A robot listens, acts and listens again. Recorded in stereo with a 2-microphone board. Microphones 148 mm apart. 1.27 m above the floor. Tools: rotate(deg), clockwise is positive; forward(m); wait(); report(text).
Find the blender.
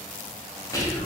wait()
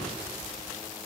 wait()
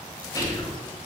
report("I can't make out a blender, only whispering.")